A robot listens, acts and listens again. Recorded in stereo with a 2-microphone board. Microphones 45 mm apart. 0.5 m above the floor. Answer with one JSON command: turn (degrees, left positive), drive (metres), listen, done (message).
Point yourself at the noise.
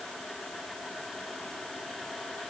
{"listen": true}
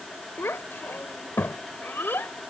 {"turn": 60}
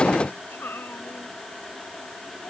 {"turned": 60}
{"turn": 60}
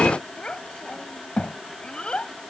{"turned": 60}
{"turn": 20}
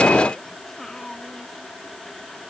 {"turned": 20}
{"turn": 10}
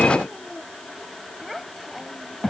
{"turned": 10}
{"done": "Facing the child speaking."}